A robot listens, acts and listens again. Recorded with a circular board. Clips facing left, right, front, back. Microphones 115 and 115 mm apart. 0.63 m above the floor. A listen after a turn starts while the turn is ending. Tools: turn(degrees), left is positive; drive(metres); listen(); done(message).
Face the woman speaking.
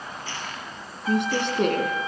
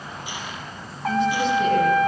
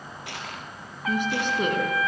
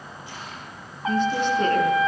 turn(degrees=75)
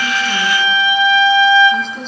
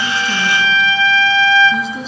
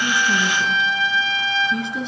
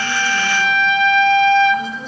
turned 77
done("Found it: a woman speaking, straight ahead.")